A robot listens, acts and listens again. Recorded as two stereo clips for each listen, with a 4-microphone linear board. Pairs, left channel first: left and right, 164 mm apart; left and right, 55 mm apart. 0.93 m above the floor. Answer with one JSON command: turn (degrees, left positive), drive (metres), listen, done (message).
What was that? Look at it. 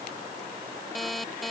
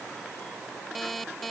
{"turn": 30}
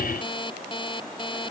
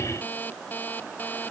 {"turn": 150}
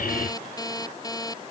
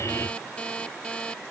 {"turn": 20}
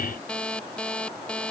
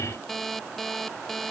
{"done": "Facing the alarm clock."}